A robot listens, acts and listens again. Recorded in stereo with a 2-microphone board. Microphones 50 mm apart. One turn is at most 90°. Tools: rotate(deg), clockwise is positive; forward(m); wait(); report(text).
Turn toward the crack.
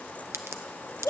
rotate(65)
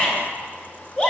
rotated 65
wait()
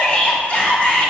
report("I heard a crack, but can't make it out now. It was about straight ahead or 50° right.")